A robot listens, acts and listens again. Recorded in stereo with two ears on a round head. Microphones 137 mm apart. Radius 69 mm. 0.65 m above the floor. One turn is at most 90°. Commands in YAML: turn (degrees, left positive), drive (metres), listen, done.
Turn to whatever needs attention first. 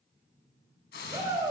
turn: -30
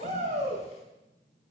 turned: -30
turn: -90
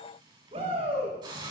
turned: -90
turn: -40
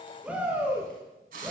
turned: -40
turn: -10
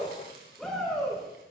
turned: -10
done: "Found it: a shout, straight ahead, over 4 m away."